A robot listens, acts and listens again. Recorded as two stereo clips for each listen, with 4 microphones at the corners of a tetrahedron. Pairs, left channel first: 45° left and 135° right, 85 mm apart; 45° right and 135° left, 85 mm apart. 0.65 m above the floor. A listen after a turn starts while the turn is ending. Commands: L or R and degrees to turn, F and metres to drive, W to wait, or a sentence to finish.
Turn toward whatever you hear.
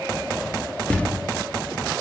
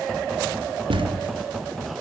L120
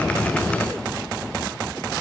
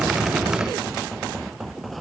I heard a thud from this way, but can't make it out now.